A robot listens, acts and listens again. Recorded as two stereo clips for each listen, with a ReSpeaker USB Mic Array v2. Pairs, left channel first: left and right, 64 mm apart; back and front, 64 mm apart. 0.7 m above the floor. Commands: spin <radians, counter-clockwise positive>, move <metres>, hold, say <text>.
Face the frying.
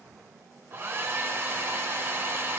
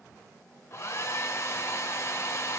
hold
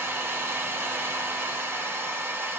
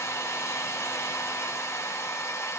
hold
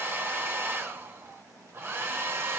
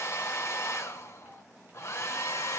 say I can't make out frying to turn to.